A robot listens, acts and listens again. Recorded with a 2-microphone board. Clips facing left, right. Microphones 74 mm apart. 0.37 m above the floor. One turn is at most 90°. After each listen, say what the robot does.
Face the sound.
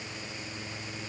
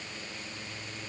Keep listening.
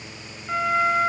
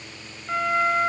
Turn 30° left.
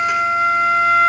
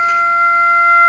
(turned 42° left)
Turn 40° right.
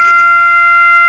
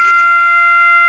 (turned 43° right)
Facing the flute, 1 to 2 m away.